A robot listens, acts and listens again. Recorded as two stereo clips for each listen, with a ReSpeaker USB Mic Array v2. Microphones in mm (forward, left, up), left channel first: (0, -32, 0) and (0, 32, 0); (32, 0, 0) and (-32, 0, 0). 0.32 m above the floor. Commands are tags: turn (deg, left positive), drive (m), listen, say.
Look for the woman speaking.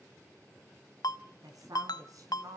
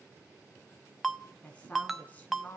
<turn deg="65"/>
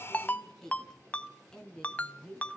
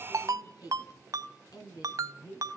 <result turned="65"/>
<turn deg="-15"/>
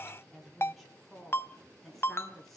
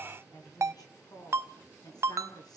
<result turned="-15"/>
<say>Found it: a woman speaking, straight ahead, over 4 m away.</say>